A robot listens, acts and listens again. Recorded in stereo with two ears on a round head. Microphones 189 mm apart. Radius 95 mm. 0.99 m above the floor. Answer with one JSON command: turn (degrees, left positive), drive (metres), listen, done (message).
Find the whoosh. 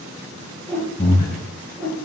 {"turn": 30}
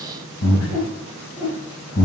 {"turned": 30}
{"turn": 145}
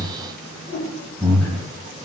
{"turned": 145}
{"turn": 45}
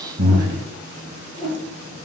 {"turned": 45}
{"done": "Facing the whoosh, 2 to 4 m away."}